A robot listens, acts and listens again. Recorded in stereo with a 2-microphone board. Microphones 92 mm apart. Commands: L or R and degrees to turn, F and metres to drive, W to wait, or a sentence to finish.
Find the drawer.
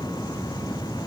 W
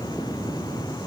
W
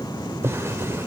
R30
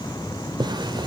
R115
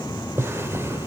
R30
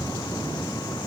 W
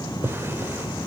R25
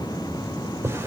R30
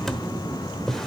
Facing the drawer.